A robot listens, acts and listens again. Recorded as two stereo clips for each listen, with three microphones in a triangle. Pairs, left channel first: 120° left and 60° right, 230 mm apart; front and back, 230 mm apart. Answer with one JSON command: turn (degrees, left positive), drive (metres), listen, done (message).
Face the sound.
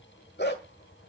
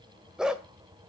{"turn": 95}
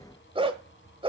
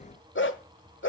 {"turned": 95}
{"done": "Found it: a dog barking, straight ahead, 1 to 2 m away."}